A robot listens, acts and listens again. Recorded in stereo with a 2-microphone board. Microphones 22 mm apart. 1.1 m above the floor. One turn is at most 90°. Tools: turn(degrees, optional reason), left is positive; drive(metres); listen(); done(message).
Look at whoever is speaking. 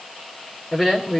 turn(degrees=-30)
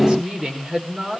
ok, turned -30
turn(degrees=-90, reason="So it is at 145° right.")
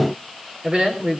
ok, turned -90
turn(degrees=-40, reason="The woman speaking is now 40° right.")
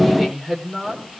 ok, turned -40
done("Facing the woman speaking, over 4 m away.")